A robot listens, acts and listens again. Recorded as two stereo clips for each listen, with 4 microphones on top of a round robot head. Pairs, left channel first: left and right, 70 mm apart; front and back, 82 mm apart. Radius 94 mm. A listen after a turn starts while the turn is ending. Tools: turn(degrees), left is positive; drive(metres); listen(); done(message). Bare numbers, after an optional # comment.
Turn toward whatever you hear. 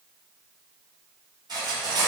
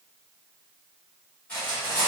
# The cutlery clinking: 75° right.
turn(-75)
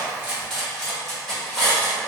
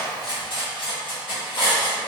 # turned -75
done("Found it: cutlery clinking, straight ahead.")